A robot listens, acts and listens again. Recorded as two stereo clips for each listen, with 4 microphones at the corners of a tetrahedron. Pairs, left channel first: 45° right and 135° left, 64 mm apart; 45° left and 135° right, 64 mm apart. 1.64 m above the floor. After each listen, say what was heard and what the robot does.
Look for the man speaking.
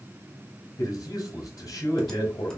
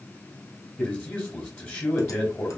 The man speaking: 20° right. Turn 20° right.
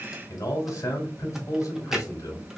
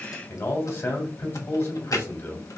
Facing the man speaking.